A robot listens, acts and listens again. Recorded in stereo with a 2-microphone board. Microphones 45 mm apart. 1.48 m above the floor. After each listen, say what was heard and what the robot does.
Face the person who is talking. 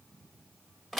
Keep listening.
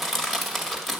Keep listening.
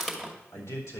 The man speaking: about 70° left or 110° left. Turn 70° left.
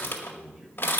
Found it: a man speaking, straight ahead.